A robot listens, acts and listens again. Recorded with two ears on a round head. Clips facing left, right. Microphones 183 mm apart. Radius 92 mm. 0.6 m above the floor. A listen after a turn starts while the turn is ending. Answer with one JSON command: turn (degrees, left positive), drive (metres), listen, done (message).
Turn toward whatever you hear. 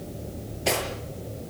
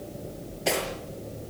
{"turn": 30}
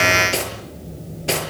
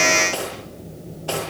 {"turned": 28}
{"turn": 155}
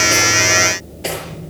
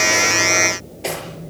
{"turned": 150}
{"done": "Facing the cutlery clinking."}